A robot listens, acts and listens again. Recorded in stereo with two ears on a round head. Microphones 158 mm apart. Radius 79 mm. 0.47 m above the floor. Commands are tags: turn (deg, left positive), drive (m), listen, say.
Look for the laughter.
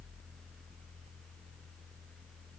<listen/>
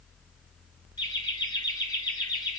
<turn deg="20"/>
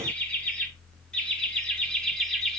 <turn deg="30"/>
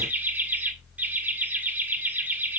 <turn deg="-10"/>
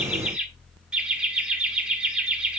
<say>Facing the laughter, 1 to 2 m away.</say>